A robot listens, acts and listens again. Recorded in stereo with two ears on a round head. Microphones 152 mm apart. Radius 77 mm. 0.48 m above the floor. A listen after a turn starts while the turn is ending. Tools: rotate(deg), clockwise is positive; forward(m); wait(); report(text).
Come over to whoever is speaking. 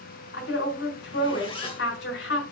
rotate(-75)
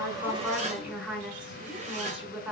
forward(1.0)
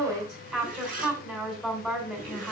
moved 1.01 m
forward(1.0)
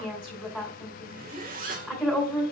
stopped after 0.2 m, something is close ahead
report("Something is in my way. I am facing the woman speaking but have not reached it.")